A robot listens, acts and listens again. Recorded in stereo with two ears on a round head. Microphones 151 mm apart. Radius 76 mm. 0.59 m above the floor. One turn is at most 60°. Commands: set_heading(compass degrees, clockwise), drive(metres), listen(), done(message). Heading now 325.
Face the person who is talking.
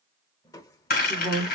set_heading(295)
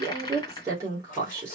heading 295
set_heading(315)
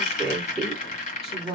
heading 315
done("Facing the woman speaking.")